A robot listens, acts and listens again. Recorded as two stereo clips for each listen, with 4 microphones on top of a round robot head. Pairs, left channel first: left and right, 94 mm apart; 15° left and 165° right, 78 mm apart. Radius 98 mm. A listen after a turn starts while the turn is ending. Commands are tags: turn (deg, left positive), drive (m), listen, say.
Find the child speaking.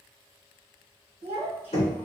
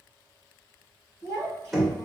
<turn deg="-110"/>
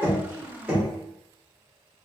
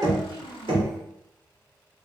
<turn deg="-25"/>
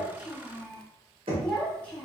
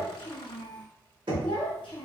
<turn deg="15"/>
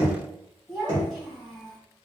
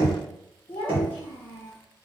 <say>Found it: a child speaking, straight ahead.</say>